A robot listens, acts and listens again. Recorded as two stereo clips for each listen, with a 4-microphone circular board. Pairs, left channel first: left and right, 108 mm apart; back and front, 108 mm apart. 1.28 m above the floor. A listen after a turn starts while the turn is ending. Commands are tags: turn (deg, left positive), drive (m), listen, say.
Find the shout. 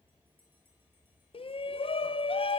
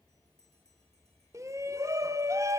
<turn deg="60"/>
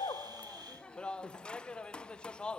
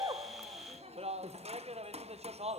<turn deg="10"/>
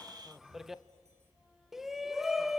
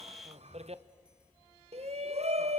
<say>Found it: a shout, straight ahead.</say>